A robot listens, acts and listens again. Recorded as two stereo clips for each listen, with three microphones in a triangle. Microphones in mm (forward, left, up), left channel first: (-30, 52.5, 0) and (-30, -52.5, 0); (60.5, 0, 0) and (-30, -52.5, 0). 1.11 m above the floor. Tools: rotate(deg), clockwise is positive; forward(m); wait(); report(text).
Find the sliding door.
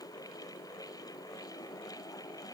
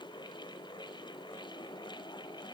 wait()
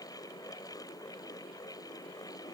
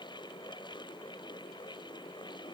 wait()
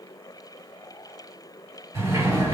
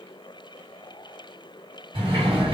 rotate(145)
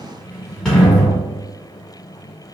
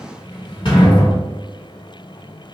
report("Found it: a sliding door, straight ahead, 1 to 2 m away.")